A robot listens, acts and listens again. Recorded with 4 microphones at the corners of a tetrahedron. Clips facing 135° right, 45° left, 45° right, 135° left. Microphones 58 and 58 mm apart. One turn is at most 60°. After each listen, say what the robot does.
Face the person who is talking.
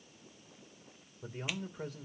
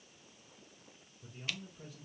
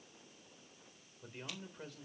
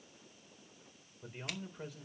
Turn 60° right.
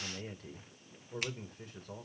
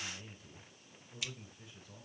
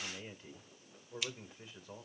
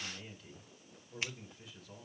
Turn 60° right.
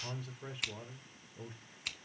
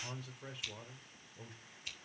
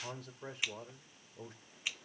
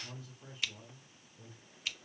Turn 45° right.
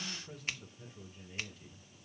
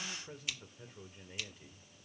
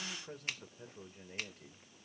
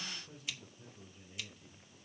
Turn 15° right.
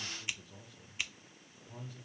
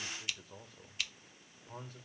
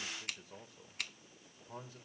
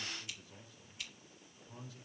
Found it: a man speaking, straight ahead, 2 to 4 m away.